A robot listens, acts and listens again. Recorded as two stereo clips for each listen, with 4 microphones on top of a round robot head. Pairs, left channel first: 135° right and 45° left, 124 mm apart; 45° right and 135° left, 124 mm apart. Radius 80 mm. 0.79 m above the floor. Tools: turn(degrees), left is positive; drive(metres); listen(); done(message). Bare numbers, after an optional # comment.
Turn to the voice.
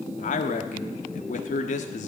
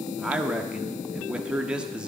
# The man speaking: 140° right.
turn(-140)
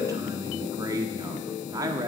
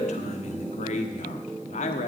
# The man speaking is now 20° right.
turn(-20)
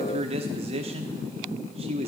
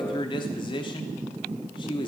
done("Found it: a man speaking, straight ahead, 1 to 2 m away.")